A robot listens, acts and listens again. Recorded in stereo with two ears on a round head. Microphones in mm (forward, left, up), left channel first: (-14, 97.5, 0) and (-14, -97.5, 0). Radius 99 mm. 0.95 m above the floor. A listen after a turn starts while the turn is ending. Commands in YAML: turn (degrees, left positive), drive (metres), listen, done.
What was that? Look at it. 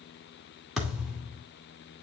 turn: 30
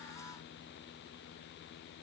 listen: true
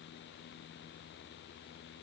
done: "I heard a thud, but can't make it out now. It was about 30° right or 150° left."